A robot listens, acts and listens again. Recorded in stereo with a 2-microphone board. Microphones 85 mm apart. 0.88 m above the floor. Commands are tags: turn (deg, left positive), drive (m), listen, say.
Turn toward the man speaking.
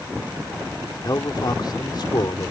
<turn deg="65"/>
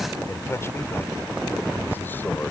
<turn deg="30"/>
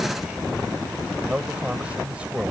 <turn deg="-15"/>
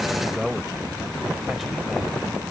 <say>Found it: a man speaking, straight ahead.</say>